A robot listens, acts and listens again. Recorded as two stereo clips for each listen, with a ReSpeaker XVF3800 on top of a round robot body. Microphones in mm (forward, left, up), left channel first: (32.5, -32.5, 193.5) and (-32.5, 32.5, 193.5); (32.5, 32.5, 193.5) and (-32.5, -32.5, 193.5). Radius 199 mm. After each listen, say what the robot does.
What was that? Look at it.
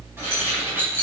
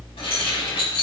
Turn 70° left.
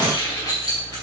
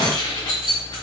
Found it: keys jangling, straight ahead.